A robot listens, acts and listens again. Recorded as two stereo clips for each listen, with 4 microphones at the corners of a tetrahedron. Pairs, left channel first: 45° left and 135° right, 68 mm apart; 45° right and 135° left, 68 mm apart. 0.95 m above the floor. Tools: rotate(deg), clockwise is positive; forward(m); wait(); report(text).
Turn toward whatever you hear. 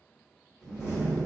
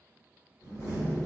report("Facing the door slam.")